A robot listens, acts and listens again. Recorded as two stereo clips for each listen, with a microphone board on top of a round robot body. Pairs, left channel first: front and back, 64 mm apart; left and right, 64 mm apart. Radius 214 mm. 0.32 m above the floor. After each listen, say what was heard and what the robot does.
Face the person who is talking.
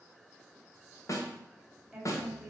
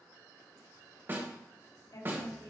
The woman speaking: 95° left. Turn 95° left.
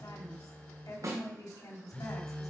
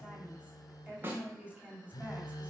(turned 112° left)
The woman speaking is now 20° right. Turn 20° right.
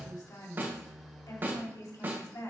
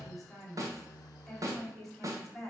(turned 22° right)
Facing the woman speaking, 2 to 4 m away.